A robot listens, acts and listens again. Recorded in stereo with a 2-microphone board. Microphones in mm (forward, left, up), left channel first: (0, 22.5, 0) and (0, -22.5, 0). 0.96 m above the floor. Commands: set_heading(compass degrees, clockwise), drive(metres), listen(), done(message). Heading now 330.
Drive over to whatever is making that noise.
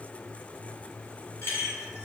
set_heading(260)
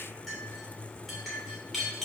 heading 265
drive(1.0)
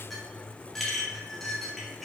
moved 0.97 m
drive(1.0)
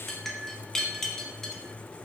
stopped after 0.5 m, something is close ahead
set_heading(255)
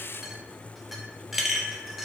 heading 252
done("Arrived at the clink, straight ahead.")